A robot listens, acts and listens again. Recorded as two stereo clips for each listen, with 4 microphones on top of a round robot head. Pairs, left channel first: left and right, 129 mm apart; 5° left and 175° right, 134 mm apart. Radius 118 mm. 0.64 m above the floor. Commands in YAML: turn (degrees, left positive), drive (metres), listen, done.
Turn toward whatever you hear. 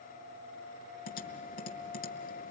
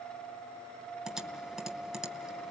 turn: 100
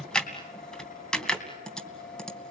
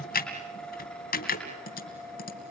done: "Facing the typing on a keyboard."